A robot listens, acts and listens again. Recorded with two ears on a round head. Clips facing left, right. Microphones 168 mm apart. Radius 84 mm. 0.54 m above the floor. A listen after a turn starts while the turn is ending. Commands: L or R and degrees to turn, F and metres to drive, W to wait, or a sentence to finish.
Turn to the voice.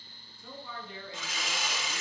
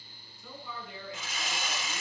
L30
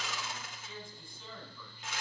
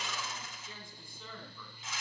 Found it: a man speaking, straight ahead, 2 to 4 m away.